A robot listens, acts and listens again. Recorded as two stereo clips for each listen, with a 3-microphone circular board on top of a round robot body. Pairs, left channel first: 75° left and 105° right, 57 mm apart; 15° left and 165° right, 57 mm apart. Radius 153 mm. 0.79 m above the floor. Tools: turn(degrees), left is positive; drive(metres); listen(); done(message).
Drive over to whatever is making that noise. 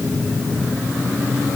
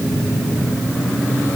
listen()
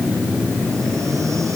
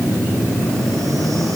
listen()
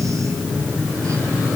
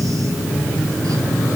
done("I can't make out anything.")